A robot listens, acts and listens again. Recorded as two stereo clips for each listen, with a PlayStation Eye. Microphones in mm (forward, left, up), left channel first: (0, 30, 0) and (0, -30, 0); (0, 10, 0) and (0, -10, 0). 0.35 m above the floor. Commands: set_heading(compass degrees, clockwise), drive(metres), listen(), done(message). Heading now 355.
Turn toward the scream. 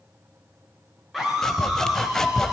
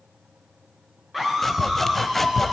set_heading(325)
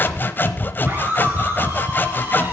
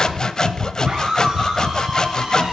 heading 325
set_heading(355)
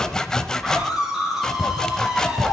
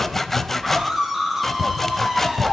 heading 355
done("Facing the scream.")